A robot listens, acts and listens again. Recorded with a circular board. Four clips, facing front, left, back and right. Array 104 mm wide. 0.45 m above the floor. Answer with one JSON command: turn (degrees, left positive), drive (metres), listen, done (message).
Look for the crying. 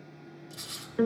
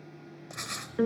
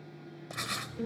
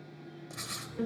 {"listen": true}
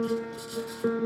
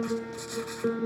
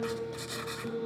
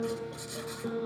{"listen": true}
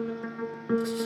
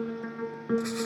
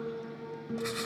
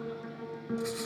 {"done": "I can't make out crying to turn to."}